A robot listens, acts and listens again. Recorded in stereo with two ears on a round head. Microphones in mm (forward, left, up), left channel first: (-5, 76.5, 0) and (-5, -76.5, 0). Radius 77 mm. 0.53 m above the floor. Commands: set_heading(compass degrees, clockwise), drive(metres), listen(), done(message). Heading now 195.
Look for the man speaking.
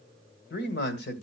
set_heading(130)
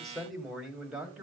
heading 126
done("Facing the man speaking, 2 to 4 m away.")